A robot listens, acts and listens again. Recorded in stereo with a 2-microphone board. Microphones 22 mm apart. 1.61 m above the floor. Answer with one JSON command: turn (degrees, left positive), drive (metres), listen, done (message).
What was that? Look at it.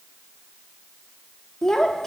{"turn": 20}
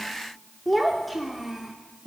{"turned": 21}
{"done": "Facing the child speaking."}